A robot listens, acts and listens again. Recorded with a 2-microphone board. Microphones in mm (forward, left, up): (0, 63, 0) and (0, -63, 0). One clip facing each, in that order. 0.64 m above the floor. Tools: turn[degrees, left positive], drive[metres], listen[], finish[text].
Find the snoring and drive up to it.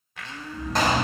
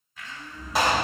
Thought: The snoring: about 45° left or 135° left.
Action: turn[45]
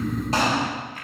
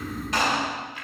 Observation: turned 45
Thought: So it is at 90° left.
Action: turn[90]
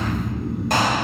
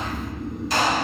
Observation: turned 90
Thought: The snoring is now 10° left.
Action: turn[10]
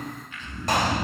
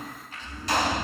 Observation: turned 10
Action: drive[1.0]
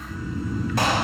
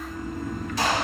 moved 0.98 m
Action: drive[1.0]
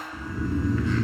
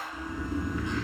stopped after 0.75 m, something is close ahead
Action: finish[I am next to the snoring.]